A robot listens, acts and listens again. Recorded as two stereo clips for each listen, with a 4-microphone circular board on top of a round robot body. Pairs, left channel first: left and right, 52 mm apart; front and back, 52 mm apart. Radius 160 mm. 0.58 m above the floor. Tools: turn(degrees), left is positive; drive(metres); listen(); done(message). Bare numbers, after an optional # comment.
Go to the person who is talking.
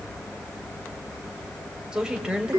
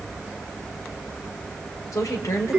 # The woman speaking: 15° right.
turn(-15)
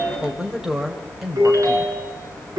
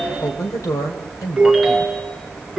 # The woman speaking is now 10° right.
turn(-10)
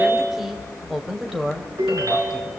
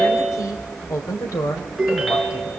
drive(1.0)
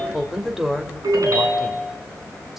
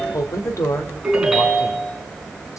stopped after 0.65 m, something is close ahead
done("Blocked. The woman speaking is further on, straight ahead.")